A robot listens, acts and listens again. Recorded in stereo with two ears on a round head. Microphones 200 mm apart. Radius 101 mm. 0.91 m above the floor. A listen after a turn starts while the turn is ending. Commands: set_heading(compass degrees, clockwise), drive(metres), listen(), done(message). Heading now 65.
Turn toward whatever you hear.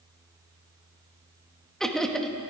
set_heading(35)
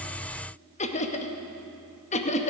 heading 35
set_heading(245)
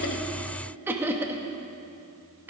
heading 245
set_heading(255)
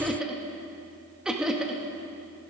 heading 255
done("Facing the laughter.")